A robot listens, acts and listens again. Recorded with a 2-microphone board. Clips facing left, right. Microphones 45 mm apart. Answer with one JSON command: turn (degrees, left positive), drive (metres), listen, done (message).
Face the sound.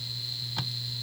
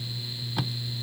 {"turn": -30}
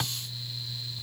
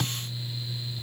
{"turn": 20}
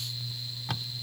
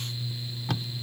{"done": "Found it: tape being pulled, straight ahead."}